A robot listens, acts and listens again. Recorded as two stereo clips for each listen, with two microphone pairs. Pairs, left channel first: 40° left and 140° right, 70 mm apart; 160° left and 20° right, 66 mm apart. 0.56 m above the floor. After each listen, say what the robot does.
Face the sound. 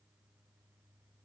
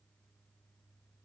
Keep listening.
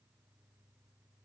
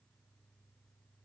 Keep listening.
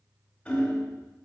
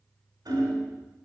Turn 25° right.
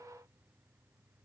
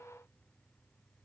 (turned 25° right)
Keep listening.
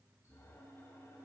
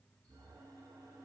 Keep listening.
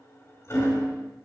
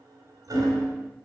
Found it: hammering, straight ahead.